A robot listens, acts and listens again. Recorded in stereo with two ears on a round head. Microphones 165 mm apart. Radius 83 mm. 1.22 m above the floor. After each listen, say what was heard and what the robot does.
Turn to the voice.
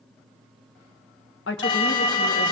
The woman speaking: about 65° left or 115° left. Turn 65° left.
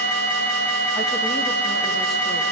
Keep listening.
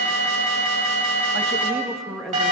Found it: a woman speaking, straight ahead.